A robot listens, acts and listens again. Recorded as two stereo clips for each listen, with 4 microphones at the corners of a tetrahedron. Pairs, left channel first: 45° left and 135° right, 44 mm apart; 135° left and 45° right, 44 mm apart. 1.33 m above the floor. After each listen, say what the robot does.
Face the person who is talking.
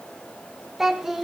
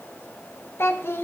Turn 145° left.
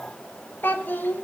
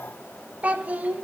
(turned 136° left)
Facing the child speaking, under 1 m away.